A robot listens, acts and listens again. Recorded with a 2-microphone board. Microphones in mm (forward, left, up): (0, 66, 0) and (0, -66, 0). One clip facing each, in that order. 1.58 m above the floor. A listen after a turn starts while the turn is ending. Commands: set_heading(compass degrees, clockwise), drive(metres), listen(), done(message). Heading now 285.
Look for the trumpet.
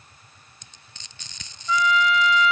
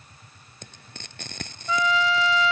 set_heading(315)
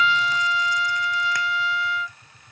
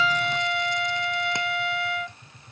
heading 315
set_heading(70)
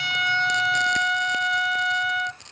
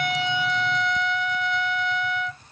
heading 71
done("Facing the trumpet.")